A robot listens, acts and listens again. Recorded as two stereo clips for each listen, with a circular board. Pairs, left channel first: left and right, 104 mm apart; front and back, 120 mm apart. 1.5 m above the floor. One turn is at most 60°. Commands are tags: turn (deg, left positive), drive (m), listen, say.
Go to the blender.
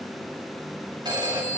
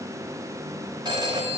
<listen/>
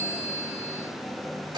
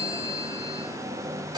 <listen/>
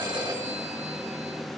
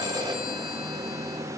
<say>I can't make out a blender to turn to.</say>